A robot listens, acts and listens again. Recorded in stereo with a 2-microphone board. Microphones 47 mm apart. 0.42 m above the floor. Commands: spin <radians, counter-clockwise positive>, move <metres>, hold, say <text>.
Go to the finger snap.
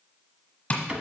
hold
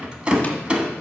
hold
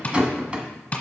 say I can't make out a finger snap, only tapping and a rattle.